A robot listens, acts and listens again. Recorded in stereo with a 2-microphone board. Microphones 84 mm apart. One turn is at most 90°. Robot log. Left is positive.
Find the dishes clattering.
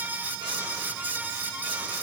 cmd idle
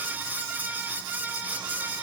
cmd idle
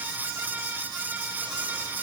end: I can't make out dishes clattering to turn to.